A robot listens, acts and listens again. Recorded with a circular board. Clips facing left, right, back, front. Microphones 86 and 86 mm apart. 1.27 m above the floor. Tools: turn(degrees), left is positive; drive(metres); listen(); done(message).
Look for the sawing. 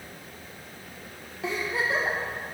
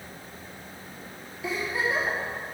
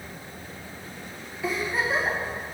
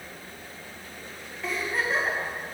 listen()
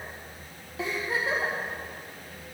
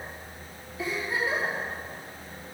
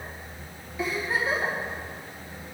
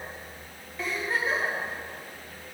listen()
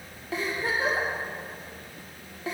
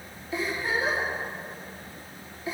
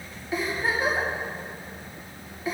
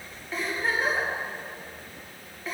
done("I can't make out sawing to turn to.")